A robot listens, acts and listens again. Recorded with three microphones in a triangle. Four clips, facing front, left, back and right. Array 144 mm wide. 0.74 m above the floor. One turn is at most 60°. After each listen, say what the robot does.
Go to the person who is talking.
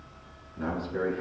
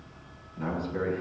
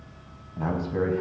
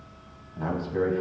Turn 60° right.
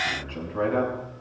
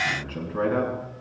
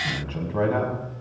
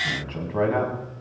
Turn 60° right.
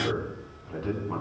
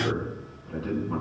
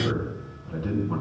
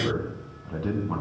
Turn 60° right.
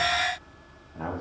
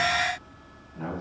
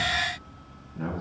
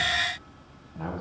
Turn 20° right.
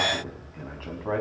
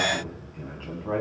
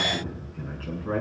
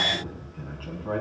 Drive 1.0 m forward.
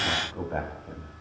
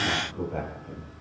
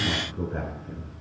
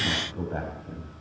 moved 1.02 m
Turn 15° right.
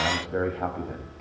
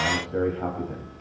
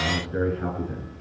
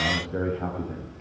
Drive 1.0 m forward.
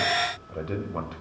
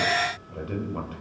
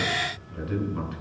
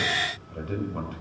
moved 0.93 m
Drive 1.0 m forward.
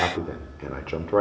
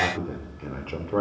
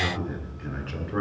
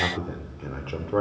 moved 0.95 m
Drive 1.0 m forward.
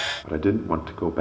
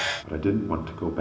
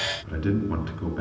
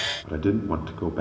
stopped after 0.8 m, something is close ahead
Arrived at the man speaking, straight ahead.